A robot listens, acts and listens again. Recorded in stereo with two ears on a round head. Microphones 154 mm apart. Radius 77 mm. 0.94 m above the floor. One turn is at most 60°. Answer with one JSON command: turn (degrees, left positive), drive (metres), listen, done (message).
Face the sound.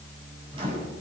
{"turn": -30}
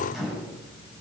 {"done": "Facing the microwave."}